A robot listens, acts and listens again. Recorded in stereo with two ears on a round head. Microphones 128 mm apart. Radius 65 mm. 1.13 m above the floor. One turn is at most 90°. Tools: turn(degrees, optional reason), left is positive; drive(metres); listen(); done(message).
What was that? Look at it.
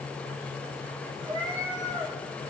turn(degrees=-30, reason="The cat meowing: about 30° right or 150° right.")
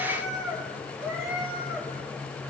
turn(degrees=-10, reason="So it is at 10° right.")
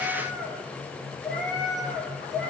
done("Found it: a cat meowing, straight ahead.")